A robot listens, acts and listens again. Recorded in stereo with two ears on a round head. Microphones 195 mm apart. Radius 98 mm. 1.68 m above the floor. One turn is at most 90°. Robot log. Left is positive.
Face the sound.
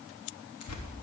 cmd yaw +90
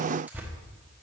end: Facing the tearing paper.